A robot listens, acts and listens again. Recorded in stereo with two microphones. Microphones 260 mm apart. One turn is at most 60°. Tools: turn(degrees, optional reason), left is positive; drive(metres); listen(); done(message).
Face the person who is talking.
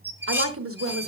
turn(degrees=-55, reason="The woman speaking: about 55° right or 125° right.")
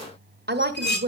turn(degrees=-50, reason="So it is at 50° right.")
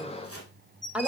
done("Facing the woman speaking.")